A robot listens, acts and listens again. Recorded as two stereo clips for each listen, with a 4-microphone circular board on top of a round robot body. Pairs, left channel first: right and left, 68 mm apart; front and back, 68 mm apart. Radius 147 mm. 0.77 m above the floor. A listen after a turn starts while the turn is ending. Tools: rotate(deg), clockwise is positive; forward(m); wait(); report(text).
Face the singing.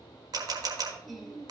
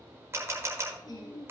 report("Facing the singing, 1 to 2 m away.")